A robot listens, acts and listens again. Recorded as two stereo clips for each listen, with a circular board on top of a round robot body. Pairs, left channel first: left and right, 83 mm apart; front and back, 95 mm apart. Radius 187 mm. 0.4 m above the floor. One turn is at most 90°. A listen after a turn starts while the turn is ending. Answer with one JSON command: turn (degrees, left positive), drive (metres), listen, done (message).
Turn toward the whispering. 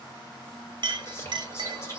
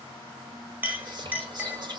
{"turn": 90}
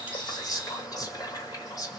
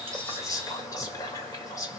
{"turn": 50}
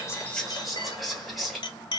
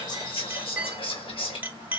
{"done": "Facing the whispering."}